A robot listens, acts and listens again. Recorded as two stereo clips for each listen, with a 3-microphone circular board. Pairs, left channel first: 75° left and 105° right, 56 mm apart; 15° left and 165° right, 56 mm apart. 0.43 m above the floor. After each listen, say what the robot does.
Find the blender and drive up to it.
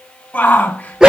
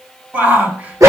Keep listening.
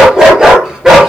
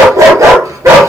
Keep listening.
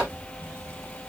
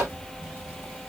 I can't make out a blender, only a dog barking and a shout.